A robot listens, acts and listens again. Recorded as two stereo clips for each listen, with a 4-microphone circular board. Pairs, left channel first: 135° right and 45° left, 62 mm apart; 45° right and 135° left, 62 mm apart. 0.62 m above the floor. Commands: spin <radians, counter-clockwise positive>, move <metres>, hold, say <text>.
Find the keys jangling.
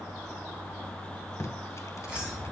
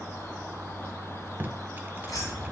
spin -0.52
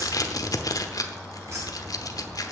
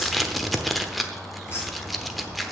say Facing the keys jangling.